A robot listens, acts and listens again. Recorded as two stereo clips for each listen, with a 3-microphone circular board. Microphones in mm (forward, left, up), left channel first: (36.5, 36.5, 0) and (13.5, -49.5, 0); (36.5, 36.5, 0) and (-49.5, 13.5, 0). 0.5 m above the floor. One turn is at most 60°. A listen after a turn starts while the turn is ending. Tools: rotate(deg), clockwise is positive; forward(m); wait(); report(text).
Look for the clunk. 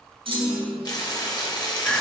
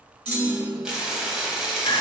rotate(60)
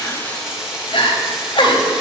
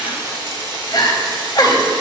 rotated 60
rotate(35)
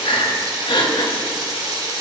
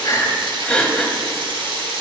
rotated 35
report("I heard a clunk from this way, but can't make it out now.")